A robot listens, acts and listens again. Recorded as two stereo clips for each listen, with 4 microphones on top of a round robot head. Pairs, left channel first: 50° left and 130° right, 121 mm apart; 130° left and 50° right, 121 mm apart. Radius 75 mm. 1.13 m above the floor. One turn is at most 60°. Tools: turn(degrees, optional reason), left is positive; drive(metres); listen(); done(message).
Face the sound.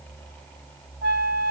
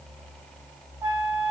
turn(degrees=-60, reason="The flute: 125° right.")
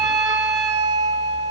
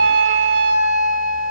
turn(degrees=-60, reason="The flute is now 70° right.")
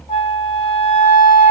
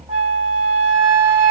done("Facing the flute, 1 to 2 m away.")